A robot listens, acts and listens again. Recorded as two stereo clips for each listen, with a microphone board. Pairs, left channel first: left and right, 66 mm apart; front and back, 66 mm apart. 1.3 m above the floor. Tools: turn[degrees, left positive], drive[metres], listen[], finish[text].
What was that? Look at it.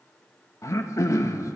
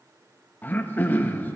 Thought: The throat clearing: 55° left.
Action: turn[55]
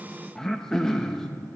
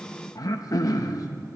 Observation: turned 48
Thought: The throat clearing is now 10° left.
Action: turn[10]
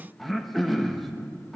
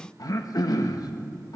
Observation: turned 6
Action: finish[Facing the throat clearing.]